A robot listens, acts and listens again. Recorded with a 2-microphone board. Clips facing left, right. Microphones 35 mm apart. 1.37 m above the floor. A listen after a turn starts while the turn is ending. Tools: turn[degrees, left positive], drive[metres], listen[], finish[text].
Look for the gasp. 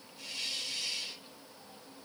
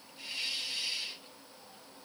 Action: listen[]
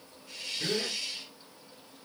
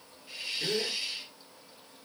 Thought: The gasp: about 40° left or 140° left.
Action: turn[40]
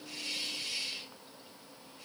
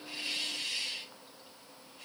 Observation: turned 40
Action: listen[]
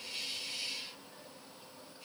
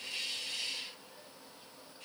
Action: finish[I heard a gasp, but can't make it out now. It was about straight ahead or 100° left.]